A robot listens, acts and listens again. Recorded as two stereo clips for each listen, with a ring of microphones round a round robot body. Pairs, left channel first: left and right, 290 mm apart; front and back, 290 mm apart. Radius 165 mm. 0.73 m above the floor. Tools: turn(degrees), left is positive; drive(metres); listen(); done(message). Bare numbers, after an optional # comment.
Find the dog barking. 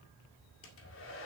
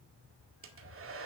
listen()
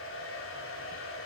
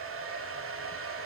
listen()
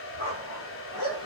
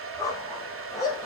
# The dog barking: 80° left.
turn(80)
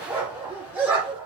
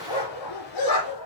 done("Found it: a dog barking, straight ahead, over 4 m away.")